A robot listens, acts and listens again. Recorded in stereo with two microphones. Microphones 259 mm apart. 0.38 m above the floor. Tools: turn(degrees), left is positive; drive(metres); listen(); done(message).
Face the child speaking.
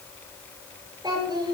turn(degrees=-20)
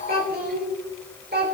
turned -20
turn(degrees=-140)
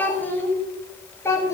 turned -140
turn(degrees=10)
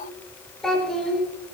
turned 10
done("Facing the child speaking.")